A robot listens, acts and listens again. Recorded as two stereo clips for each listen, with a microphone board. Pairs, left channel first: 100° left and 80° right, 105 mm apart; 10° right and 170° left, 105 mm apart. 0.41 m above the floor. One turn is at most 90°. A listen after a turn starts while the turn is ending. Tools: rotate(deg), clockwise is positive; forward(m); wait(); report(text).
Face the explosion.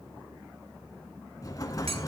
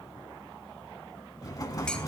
rotate(-45)
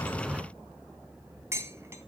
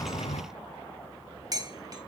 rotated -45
report("I heard an explosion from this way, but can't make it out now.")